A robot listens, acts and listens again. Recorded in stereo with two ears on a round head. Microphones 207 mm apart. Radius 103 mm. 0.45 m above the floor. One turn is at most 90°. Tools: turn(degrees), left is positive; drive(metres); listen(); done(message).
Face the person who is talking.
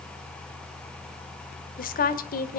turn(degrees=40)
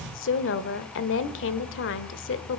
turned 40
turn(degrees=90)
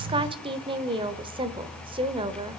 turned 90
turn(degrees=-25)
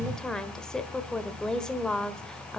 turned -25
done("Found it: a woman speaking, straight ahead, 1 to 2 m away.")